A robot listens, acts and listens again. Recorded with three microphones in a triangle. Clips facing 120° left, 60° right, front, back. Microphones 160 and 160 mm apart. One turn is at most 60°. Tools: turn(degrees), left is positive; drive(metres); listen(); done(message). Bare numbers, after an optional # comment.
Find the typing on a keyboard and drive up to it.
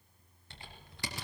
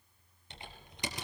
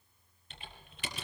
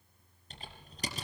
# The typing on a keyboard: 130° right.
turn(-60)
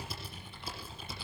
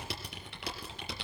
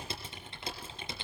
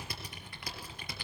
# The typing on a keyboard is now 65° right.
turn(-60)
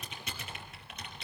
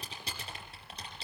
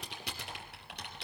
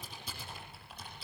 drive(1.0)
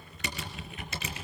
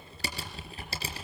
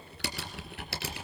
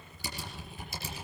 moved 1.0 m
drive(1.0)
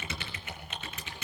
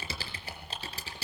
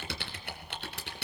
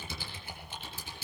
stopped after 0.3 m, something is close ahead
done("Blocked. The typing on a keyboard is further on, straight ahead.")